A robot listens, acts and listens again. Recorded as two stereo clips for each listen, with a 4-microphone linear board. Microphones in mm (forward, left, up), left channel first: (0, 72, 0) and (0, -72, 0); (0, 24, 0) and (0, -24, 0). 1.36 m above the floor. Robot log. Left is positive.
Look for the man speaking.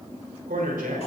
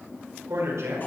cmd yaw -90
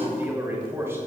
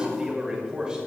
note: So it is at 20° right.
cmd yaw -20
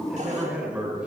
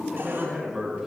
note: The man speaking is now 10° right.
cmd yaw -10
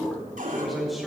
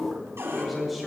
end: Facing the man speaking.